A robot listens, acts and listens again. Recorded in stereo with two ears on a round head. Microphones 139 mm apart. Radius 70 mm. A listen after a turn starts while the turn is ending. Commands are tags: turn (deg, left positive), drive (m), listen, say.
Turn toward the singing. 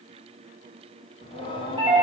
<turn deg="35"/>
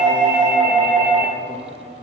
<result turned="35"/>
<turn deg="130"/>
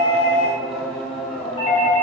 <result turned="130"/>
<say>Found it: singing, straight ahead, 2 to 4 m away.</say>